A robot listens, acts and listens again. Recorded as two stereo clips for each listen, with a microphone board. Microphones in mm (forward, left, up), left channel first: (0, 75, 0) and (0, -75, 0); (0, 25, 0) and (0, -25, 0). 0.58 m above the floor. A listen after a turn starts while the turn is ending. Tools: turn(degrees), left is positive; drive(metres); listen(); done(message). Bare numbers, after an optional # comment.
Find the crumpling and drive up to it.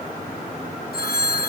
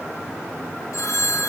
listen()
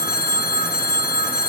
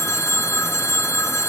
listen()
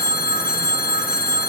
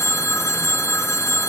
done("I can't make out crumpling, only a phone ringing.")